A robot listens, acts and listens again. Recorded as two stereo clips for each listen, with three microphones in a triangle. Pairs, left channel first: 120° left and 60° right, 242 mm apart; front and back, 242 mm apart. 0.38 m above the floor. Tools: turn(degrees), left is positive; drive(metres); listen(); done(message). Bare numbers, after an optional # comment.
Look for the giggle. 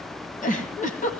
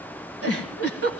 # The giggle: 175° left.
turn(175)
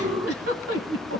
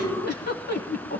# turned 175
# The giggle is now 45° right.
turn(-45)
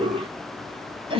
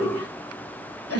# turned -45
done("Found it: a giggle, straight ahead.")